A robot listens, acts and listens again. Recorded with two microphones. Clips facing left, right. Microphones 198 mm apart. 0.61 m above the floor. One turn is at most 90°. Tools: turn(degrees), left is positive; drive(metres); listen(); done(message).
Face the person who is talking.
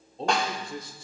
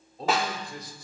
turn(degrees=25)
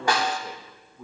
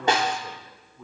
turn(degrees=10)
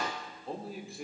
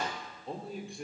done("Found it: a man speaking, straight ahead.")